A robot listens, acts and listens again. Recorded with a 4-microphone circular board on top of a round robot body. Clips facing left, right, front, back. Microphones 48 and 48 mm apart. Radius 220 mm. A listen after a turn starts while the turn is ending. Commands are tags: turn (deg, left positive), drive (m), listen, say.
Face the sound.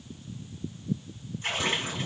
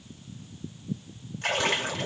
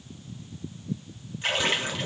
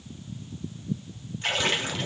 <turn deg="-85"/>
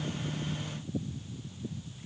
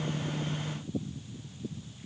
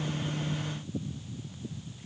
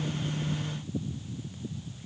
<say>Facing where the splash came from. I can't hear it now.</say>